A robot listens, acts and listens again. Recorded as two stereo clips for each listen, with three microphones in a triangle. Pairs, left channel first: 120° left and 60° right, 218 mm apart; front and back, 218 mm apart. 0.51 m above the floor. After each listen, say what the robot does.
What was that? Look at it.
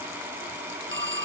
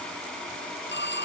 Turn 35° right.
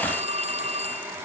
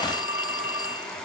Facing the phone ringing.